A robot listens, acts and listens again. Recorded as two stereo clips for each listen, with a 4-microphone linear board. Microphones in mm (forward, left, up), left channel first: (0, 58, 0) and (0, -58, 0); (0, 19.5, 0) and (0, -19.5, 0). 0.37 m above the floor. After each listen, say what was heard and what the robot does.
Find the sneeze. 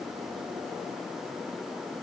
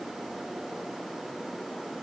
Keep listening.
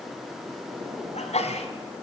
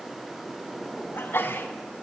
The sneeze: about 70° left or 110° left. Turn 70° left.
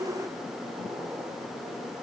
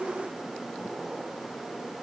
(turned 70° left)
Keep listening.
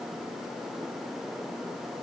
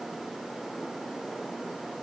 I heard a sneeze, but can't make it out now. It was about straight ahead or 40° left.